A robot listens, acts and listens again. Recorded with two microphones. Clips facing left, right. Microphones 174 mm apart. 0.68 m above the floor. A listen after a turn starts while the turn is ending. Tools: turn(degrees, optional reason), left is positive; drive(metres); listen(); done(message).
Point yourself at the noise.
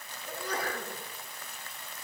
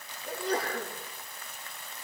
turn(degrees=-30, reason="The sneeze: about 30° right or 150° right.")
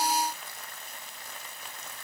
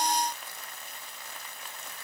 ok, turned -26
listen()
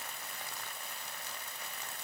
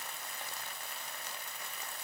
done("I heard a sneeze, but can't make it out now. It was about 5° right or 125° right.")